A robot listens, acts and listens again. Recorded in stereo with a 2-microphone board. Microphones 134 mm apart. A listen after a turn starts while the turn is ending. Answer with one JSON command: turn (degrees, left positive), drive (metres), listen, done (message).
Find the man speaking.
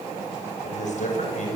{"turn": 65}
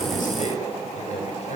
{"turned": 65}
{"turn": 60}
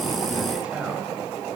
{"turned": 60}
{"turn": -10}
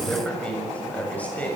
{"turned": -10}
{"turn": 10}
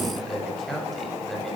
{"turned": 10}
{"done": "Facing the man speaking."}